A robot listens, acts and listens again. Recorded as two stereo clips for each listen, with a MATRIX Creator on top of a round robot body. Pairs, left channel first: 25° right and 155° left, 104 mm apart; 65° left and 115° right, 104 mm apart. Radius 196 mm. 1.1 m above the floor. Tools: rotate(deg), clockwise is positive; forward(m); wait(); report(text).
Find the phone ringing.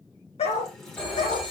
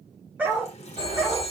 rotate(105)
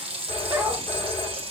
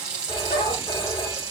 rotate(-20)
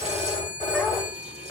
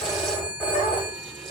report("Found it: a phone ringing, straight ahead.")